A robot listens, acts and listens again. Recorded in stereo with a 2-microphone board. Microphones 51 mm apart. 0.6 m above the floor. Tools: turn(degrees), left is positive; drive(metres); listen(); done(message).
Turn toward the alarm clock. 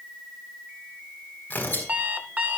turn(degrees=-35)
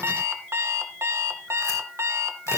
turn(degrees=-110)
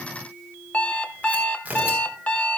turn(degrees=30)
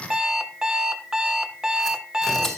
turn(degrees=-10)
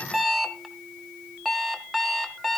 done("Facing the alarm clock.")